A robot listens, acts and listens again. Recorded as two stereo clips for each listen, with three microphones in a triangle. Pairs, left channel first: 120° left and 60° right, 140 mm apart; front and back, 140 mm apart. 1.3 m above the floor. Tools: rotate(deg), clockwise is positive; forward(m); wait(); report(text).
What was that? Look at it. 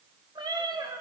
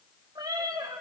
rotate(120)
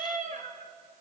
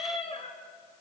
rotate(45)
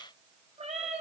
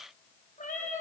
rotate(20)
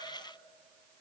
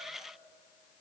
wait()
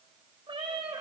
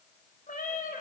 rotate(10)
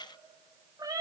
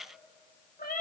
report("Found it: a cat meowing, straight ahead, 2 to 4 m away.")